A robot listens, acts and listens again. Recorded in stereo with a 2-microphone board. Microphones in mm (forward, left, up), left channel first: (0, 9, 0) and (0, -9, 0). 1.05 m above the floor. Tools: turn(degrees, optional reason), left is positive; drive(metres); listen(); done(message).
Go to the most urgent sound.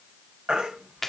turn(degrees=-90)
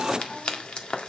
listen()
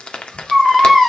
drive(metres=1.0)
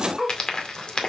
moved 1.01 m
drive(metres=1.0)
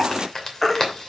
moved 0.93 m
turn(degrees=10, reason="The baby crying is now 10° left.")
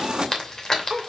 listen()
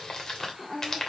listen()
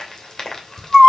drive(metres=1.0)
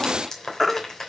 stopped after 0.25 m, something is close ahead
done("I am next to the baby crying.")